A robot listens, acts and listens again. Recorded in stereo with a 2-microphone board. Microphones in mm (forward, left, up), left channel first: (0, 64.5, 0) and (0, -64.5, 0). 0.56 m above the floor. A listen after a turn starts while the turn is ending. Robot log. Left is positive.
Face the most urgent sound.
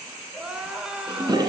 cmd yaw -30
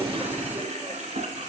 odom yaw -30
cmd idle
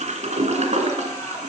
cmd idle
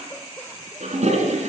end: I heard crying, but can't make it out now. It was about 20° left or 140° right.